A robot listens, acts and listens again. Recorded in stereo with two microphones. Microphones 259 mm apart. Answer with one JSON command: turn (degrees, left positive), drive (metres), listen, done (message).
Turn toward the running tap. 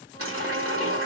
{"turn": -55}
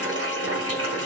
{"turn": -65}
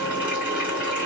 {"done": "Facing the running tap."}